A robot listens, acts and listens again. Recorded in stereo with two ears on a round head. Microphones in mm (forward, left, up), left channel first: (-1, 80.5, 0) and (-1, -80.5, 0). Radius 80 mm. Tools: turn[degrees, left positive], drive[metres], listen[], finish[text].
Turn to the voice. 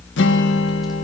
Action: listen[]
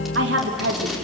Thought: The woman speaking: about 70° right or 110° right.
Action: turn[-70]
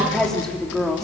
Action: finish[Facing the woman speaking, 2 to 4 m away.]